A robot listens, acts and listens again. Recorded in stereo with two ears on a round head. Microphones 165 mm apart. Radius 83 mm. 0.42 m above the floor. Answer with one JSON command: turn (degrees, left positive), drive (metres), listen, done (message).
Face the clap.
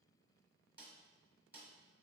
{"listen": true}
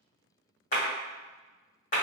{"turn": 50}
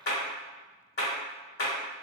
{"turn": 65}
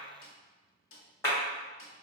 {"turn": 15}
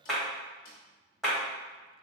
{"done": "Facing the clap."}